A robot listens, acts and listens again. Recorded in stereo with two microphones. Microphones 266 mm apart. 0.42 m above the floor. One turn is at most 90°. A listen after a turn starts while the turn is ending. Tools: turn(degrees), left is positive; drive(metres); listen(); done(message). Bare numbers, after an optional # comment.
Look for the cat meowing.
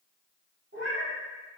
# The cat meowing: about 70° right or 110° right.
turn(-70)
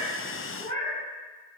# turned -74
# So it is at 30° right.
turn(-30)
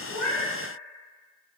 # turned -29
listen()
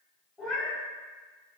done("Found it: a cat meowing, straight ahead.")